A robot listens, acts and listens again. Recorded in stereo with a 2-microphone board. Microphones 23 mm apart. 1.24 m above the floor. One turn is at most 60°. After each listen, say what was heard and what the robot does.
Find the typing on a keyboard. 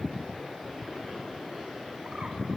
Keep listening.
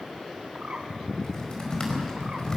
The typing on a keyboard: about 30° left or 150° left. Turn 30° left.
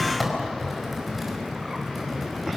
Facing the typing on a keyboard, over 4 m away.